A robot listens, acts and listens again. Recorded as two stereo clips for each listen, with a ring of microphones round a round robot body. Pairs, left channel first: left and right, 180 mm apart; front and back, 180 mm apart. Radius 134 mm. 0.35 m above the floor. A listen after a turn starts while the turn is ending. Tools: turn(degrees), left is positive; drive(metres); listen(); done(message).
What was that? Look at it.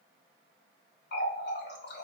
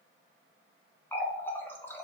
turn(degrees=80)
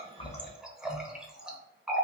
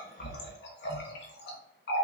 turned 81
done("Found it: a running tap, straight ahead, under 1 m away.")